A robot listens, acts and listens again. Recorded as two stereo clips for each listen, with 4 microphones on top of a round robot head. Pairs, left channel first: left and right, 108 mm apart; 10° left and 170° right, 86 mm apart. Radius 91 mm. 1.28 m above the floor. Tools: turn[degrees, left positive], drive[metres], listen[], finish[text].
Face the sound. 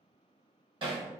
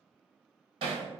Thought: The hammering: 140° right.
Action: turn[-140]
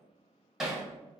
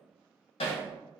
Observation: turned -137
Action: finish[Facing the hammering.]